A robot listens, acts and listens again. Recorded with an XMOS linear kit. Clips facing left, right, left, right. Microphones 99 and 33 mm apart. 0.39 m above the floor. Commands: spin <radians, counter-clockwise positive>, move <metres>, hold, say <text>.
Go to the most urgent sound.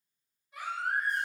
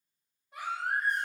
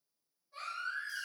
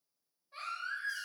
spin -1.05
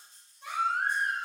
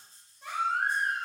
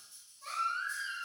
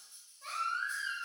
spin -0.96
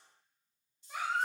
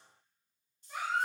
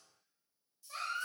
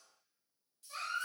spin 0.17
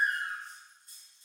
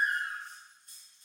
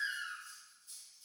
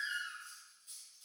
move 1.0
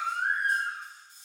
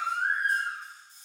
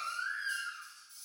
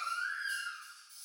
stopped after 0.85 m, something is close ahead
say I am next to the baby crying.